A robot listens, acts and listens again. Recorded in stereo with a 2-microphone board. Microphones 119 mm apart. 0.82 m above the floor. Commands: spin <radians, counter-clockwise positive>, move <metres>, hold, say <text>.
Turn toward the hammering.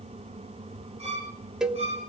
hold
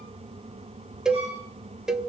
hold
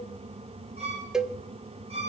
say I can't make out hammering, only a violin and a cowbell.